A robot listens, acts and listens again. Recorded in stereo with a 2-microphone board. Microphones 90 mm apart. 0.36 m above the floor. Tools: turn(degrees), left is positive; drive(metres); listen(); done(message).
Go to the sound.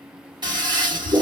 turn(degrees=-60)
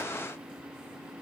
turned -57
listen()
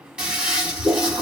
turn(degrees=-10)
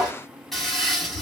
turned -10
drive(metres=1.0)
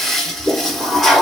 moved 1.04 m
drive(metres=1.0)
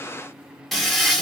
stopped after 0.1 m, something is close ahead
done("Arrived at the toilet flushing, straight ahead.")